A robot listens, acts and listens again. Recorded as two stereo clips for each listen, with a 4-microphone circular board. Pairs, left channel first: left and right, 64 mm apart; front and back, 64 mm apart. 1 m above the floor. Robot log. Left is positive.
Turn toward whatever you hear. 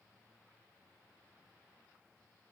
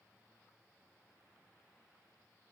cmd idle
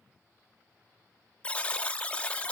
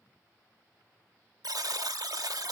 note: The buzzer: 160° left.
cmd yaw +160
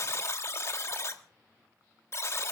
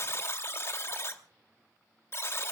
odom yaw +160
note: The buzzer is now 50° left.
cmd yaw +50
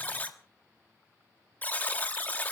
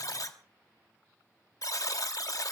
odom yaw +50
note: The buzzer is now 30° left.
cmd yaw +30
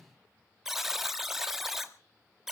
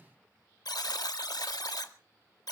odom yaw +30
end: Facing the buzzer, 1 to 2 m away.